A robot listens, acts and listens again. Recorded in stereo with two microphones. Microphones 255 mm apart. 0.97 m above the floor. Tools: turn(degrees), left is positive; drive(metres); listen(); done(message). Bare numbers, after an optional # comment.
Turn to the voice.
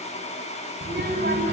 # The child speaking: about 45° right or 135° right.
turn(-45)
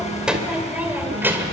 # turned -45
# So it is at 10° right.
turn(-10)
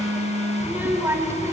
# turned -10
# The child speaking is now 10° right.
turn(-10)
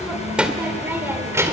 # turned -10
# The child speaking is now 10° right.
turn(-10)
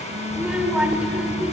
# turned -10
done("Facing the child speaking, 2 to 4 m away.")